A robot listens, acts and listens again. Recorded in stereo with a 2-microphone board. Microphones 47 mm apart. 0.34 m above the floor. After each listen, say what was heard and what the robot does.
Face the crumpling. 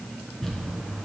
Turn 30° left.
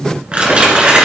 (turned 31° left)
So it is at 25° right. Turn 25° right.
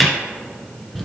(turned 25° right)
Found it: crumpling, straight ahead.